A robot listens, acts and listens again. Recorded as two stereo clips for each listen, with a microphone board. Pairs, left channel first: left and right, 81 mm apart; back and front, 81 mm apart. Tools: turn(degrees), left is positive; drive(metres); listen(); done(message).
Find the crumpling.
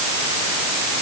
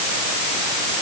listen()
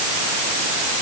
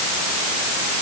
listen()
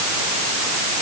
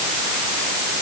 done("I can't make out crumpling.")